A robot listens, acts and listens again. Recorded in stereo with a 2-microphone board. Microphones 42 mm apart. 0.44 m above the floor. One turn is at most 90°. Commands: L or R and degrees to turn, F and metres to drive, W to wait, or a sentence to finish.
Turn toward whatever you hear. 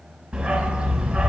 R30
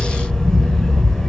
Facing the dog barking.